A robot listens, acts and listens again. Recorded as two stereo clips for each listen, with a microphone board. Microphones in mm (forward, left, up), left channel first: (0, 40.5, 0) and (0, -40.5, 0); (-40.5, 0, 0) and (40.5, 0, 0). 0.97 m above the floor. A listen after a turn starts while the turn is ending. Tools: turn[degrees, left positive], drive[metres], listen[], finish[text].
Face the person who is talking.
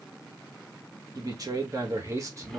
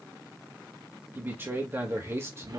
Thought: The man speaking: 50° right.
Action: turn[-50]
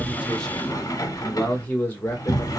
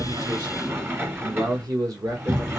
Thought: The man speaking is now 30° left.
Action: turn[30]
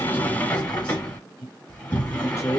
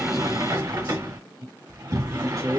Thought: The man speaking is now 35° left.
Action: turn[35]
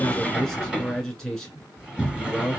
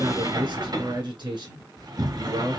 Action: finish[Found it: a man speaking, straight ahead, 1 to 2 m away.]